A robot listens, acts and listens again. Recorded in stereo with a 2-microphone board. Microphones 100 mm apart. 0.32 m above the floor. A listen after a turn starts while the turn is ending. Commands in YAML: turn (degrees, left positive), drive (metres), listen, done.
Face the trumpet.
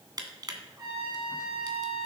turn: -40
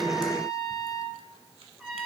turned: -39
done: "Found it: a trumpet, straight ahead, over 4 m away."